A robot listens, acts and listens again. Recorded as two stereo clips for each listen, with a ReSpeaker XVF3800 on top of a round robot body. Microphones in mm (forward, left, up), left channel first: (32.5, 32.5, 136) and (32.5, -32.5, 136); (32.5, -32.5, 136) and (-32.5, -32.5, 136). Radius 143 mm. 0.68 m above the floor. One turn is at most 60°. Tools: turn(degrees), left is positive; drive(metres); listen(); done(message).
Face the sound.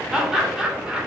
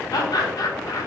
turn(degrees=-10)
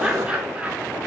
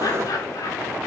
turn(degrees=-20)
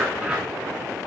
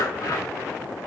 listen()
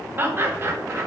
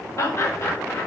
turn(degrees=-40)
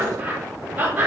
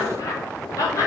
turn(degrees=-30)
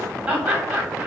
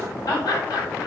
turn(degrees=-15)
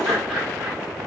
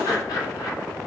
listen()
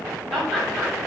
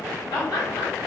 done("Found it: laughter, straight ahead.")